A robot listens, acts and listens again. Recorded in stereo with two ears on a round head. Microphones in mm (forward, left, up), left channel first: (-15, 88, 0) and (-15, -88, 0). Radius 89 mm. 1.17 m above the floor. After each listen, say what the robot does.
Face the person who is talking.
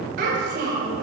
Turn 55° right.
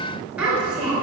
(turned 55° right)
Found it: a child speaking, straight ahead.